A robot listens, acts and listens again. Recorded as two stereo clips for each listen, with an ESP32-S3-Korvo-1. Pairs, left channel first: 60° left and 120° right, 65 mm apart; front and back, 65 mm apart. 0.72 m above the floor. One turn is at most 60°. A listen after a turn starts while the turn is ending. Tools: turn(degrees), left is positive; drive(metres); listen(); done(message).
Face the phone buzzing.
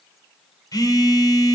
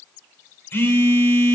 turn(degrees=55)
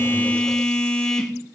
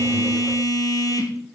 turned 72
turn(degrees=-20)
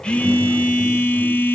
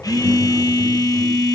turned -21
done("Facing the phone buzzing, 1 to 2 m away.")